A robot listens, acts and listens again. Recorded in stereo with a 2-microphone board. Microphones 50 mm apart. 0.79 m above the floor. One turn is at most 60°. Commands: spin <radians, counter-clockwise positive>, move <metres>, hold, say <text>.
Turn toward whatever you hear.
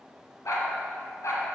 spin 1.05
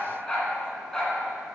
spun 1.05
spin 0.17
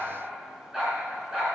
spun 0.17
spin -0.26
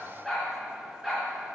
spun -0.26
say Found it: a dog barking, straight ahead, 2 to 4 m away.